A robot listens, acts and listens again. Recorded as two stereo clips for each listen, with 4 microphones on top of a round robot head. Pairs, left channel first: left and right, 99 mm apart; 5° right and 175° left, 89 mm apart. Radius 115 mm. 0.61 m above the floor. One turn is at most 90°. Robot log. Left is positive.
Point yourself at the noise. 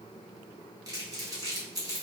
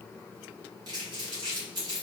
note: The crumpling: 140° right.
cmd yaw -90
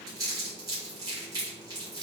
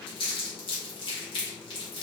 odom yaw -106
note: The crumpling is now 35° right.
cmd yaw -35
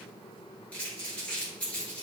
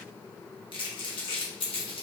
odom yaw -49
note: The crumpling is now 15° left.
cmd yaw +15
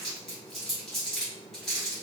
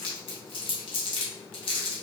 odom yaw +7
end: Facing the crumpling.